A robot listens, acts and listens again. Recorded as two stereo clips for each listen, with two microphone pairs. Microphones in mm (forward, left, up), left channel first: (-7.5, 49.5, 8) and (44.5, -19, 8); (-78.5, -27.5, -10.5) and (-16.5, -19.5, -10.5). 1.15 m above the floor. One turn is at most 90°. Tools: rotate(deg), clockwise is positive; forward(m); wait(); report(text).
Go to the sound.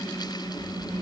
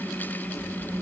wait()
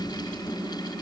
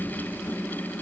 wait()
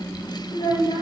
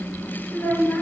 rotate(-90)
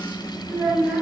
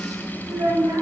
rotate(-25)
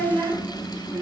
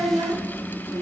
forward(1.0)
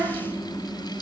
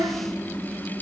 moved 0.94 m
forward(1.0)
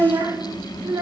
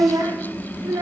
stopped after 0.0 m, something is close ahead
report("Arrived at the child speaking, straight ahead.")